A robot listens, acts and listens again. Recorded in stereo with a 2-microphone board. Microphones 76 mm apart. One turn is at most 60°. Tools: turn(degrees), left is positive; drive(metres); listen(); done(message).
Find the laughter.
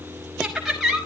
turn(degrees=-30)
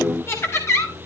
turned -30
turn(degrees=35)
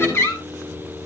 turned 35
turn(degrees=30)
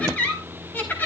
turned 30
turn(degrees=20)
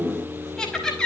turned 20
done("Facing the laughter.")